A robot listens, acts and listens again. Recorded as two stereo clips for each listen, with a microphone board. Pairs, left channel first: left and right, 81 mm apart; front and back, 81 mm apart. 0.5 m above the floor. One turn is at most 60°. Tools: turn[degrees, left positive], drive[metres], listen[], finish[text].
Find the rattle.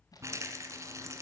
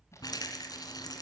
Thought: The rattle: 40° right.
Action: turn[-40]
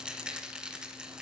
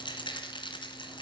Thought: The rattle is now 10° right.
Action: turn[-10]
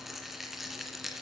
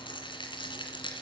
Action: finish[Found it: a rattle, straight ahead.]